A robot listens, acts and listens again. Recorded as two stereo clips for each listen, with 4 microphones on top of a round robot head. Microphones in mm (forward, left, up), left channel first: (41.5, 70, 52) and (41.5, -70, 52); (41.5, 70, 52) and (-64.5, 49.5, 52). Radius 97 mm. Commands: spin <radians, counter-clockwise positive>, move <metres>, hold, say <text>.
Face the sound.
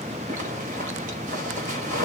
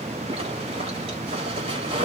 spin -2.18
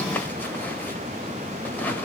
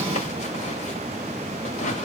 spin 0.17
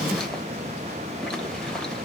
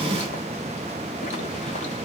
hold
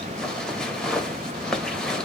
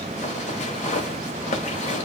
say Found it: a zipper, straight ahead, 1 to 2 m away.